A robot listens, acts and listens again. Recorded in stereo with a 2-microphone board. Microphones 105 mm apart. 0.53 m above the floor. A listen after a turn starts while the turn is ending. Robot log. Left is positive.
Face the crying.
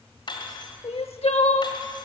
note: The crying: about 75° left or 105° left.
cmd yaw +75
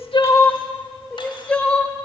note: So it is at 10° left.
cmd yaw +10
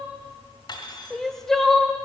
end: Facing the crying.